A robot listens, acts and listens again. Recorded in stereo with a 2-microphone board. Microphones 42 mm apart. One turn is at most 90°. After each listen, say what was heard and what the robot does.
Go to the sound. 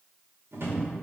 The drawer: about 70° right or 110° right. Turn 70° right.
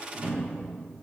So it is at 35° right. Turn 35° right.
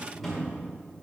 Drive 1.0 m forward.
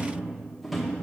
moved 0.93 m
Drive 1.0 m forward.
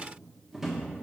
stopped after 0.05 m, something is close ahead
I am next to the drawer.